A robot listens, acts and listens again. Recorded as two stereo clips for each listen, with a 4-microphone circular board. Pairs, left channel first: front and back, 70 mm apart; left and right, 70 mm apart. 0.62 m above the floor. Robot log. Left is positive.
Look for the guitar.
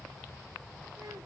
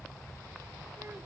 cmd idle
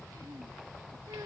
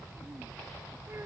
cmd idle
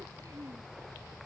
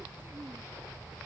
end: I can't make out a guitar.